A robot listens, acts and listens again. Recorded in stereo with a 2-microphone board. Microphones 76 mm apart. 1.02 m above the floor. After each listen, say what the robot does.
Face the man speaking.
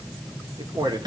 Turn 65° right.
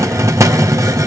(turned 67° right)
Keep listening.
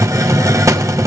Keep listening.
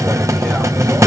I heard a man speaking, but can't make it out now. It was about straight ahead or 45° right.